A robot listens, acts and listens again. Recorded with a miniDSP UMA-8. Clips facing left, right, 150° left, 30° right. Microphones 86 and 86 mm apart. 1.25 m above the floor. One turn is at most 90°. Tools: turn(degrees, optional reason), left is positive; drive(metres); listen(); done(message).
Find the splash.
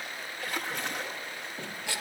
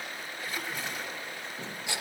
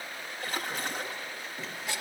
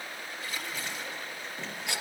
turn(degrees=90, reason="The splash: 115° left.")
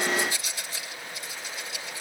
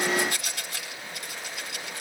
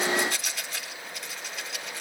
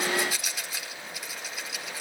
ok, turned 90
turn(degrees=25, reason="Nothing new. It was at 25° left.")
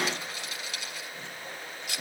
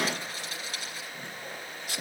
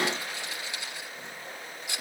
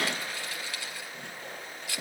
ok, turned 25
done("I heard a splash from this way, but can't make it out now.")